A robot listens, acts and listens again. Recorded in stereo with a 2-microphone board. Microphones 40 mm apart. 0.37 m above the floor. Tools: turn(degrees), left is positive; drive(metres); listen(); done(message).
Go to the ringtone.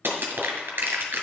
listen()
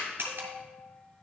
turn(degrees=-55)
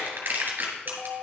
drive(metres=1.0)
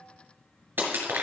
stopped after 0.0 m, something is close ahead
listen()
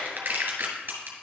listen()
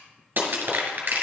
done("Facing where the ringtone came from. I can't hear it now. I did not reach it.")